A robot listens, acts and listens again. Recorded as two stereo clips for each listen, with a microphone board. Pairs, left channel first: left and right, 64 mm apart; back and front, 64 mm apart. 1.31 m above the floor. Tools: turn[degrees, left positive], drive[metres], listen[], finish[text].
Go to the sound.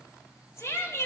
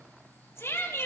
Thought: The shout: 135° left.
Action: turn[135]
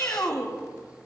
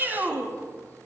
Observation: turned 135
Thought: The shout is now 55° left.
Action: turn[55]
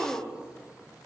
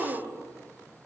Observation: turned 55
Action: drive[1.0]
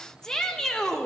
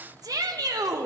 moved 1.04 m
Thought: The shout is now 10° left.
Action: turn[10]
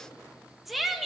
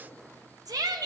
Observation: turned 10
Action: drive[1.0]
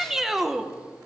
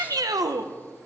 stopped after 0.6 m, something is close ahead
Action: finish[Arrived at the shout, straight ahead.]